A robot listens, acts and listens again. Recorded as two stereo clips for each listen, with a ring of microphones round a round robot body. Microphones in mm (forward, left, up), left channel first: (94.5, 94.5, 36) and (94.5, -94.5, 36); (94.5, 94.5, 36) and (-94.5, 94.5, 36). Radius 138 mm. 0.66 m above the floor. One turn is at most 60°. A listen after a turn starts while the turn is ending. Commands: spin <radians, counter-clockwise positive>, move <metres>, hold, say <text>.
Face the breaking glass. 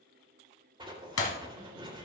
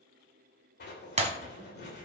spin 1.05
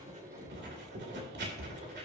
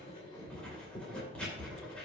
spin 1.05
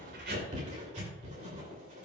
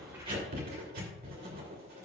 say Facing where the breaking glass came from. I can't hear it now.